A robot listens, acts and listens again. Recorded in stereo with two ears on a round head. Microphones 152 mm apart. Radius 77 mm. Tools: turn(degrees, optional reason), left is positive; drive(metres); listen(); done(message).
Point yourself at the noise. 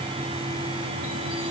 listen()
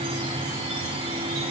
listen()
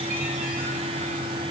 done("I can't make out anything to turn to.")